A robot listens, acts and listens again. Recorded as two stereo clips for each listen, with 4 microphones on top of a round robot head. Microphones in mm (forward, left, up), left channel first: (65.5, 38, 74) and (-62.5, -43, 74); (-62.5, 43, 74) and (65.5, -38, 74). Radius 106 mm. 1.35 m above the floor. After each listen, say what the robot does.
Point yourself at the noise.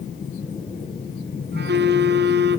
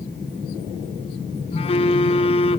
Turn 155° right.
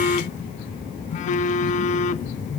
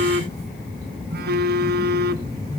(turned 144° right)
Turn 10° right.
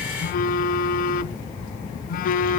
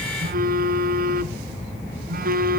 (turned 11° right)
Found it: a phone buzzing, straight ahead.